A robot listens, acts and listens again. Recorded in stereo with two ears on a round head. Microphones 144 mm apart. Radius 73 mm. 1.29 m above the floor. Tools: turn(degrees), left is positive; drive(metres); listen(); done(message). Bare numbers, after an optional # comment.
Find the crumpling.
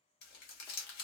# The crumpling: about 65° left or 115° left.
turn(65)
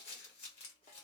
# So it is at 40° left.
turn(40)
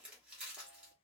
done("Found it: crumpling, straight ahead, 1 to 2 m away.")